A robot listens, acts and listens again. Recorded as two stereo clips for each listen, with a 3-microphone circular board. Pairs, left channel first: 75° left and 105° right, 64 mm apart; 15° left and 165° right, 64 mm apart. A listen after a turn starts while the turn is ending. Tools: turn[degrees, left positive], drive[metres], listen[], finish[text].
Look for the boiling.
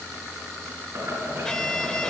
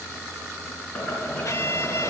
Thought: The boiling: 55° right.
Action: turn[-55]
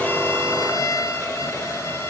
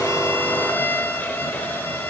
Action: listen[]
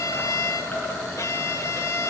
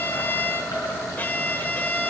Thought: The boiling is now 10° left.
Action: turn[10]
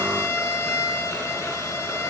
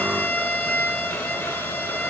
Action: listen[]
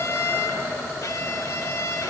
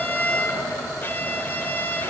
Action: finish[Facing the boiling, over 4 m away.]